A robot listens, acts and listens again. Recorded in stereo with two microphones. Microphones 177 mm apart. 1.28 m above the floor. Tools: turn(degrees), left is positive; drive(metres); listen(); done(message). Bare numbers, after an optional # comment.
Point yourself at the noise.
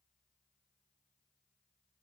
listen()
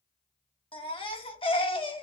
# The baby crying: about 30° left or 150° left.
turn(30)
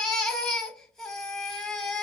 done("Found it: a baby crying, straight ahead, under 1 m away.")